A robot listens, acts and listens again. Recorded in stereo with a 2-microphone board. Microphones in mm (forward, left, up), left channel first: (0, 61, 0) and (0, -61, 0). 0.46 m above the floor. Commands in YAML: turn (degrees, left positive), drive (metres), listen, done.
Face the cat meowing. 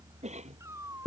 turn: -25
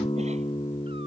listen: true
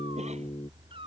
turn: -130
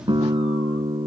listen: true
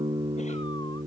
listen: true
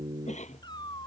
turn: 40
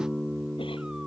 listen: true
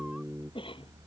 listen: true
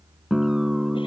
done: "I heard a cat meowing from this way, but can't make it out now."